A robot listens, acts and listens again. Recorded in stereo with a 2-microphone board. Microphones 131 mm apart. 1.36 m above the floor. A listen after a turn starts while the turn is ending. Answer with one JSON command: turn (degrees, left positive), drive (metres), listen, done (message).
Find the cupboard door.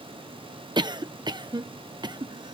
{"listen": true}
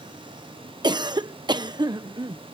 {"listen": true}
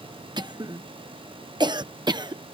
{"done": "I can't make out a cupboard door, only a cough."}